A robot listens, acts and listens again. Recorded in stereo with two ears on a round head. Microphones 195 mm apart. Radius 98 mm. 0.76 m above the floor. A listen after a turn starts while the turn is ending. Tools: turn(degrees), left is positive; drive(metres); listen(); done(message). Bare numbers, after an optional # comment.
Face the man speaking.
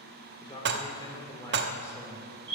turn(30)
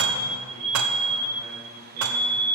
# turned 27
listen()
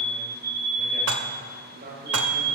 # So it is at 40° right.
turn(-40)
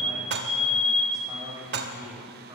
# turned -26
# The man speaking is now 15° right.
turn(-15)
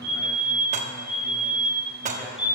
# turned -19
listen()
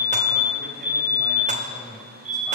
done("Found it: a man speaking, straight ahead, 2 to 4 m away.")